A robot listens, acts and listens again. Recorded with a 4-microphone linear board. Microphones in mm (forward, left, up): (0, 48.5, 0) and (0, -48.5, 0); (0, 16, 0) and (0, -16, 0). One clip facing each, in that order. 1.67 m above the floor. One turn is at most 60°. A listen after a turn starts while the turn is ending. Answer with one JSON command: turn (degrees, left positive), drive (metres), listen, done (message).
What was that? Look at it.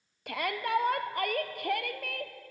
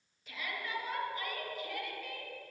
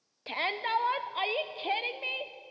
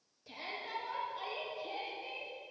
{"turn": 60}
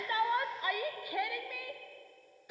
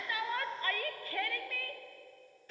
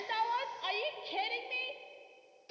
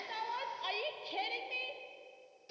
{"turn": 15}
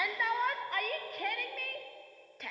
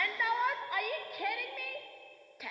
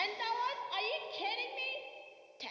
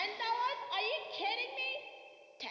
{"done": "Facing the shout."}